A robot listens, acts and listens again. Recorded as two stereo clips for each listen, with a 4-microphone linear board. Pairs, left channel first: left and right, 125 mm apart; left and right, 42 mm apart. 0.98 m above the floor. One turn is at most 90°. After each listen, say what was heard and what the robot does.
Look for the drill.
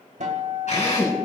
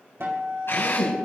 The drill: about 65° left or 115° left. Turn 65° left.
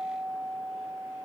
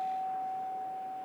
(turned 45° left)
Keep listening.
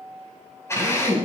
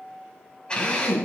So it is at 20° left. Turn 20° left.
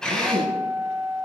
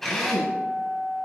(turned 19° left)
Found it: a drill, straight ahead, over 4 m away.